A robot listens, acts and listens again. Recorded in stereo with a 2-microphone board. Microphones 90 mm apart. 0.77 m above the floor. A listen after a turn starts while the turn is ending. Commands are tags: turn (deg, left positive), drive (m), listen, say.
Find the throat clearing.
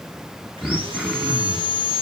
<turn deg="30"/>
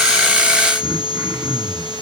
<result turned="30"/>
<turn deg="-30"/>
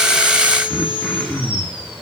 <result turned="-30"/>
<say>Found it: throat clearing, straight ahead.</say>